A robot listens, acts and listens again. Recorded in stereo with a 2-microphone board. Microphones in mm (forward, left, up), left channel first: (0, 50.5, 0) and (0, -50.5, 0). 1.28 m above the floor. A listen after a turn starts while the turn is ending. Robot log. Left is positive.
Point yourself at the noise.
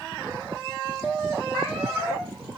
cmd yaw -30
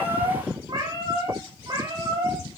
note: So it is at 145° right.
cmd yaw -145
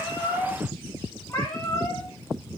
note: The cat meowing is now 25° left.
cmd yaw +25
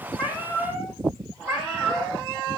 note: The cat meowing is now 15° right.
cmd yaw -15
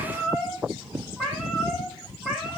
end: Facing the cat meowing, over 4 m away.